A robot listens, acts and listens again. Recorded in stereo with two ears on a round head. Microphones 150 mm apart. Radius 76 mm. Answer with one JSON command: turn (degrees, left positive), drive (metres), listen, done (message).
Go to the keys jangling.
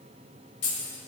{"turn": 90}
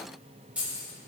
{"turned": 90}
{"turn": -10}
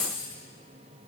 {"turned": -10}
{"drive": 1.0}
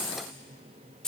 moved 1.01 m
{"drive": 1.0}
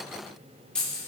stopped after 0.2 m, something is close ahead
{"done": "Arrived at the keys jangling, straight ahead."}